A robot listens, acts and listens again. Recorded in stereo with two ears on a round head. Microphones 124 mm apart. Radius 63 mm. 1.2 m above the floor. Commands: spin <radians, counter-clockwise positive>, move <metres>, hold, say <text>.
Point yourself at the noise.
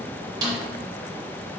spin -0.52
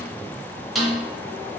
say Found it: a snare drum, straight ahead, 1 to 2 m away.